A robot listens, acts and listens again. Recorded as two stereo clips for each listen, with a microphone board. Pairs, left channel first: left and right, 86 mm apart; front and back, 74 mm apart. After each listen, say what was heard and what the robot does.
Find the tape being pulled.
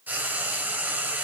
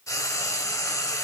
Keep listening.
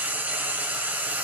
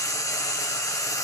Keep listening.
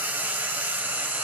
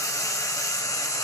I can't make out tape being pulled, only frying.